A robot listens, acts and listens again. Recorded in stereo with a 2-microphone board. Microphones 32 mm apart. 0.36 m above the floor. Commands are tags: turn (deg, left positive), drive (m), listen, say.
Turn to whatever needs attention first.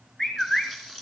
<listen/>
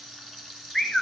<listen/>
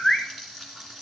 <say>I can't make out anything urgent, only a bird and frying.</say>